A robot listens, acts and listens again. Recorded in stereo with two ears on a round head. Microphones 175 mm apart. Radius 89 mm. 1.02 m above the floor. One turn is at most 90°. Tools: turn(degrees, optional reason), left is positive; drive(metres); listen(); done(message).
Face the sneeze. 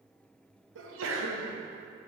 turn(degrees=-75, reason="The sneeze: about 75° right or 105° right.")
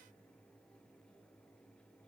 listen()
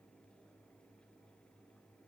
done("I heard a sneeze, but can't make it out now. It was about straight ahead or 30° right.")